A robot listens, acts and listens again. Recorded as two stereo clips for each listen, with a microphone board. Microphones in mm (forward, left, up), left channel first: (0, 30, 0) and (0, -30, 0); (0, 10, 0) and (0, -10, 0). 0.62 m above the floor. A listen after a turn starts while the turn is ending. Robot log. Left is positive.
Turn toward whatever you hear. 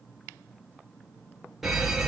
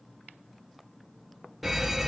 cmd yaw +30
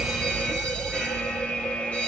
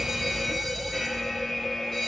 note: So it is at 150° left.
cmd yaw +150
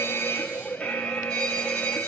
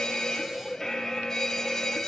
note: The fire alarm is now 15° left.
cmd yaw +15
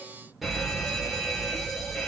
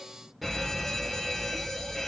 end: Facing the fire alarm.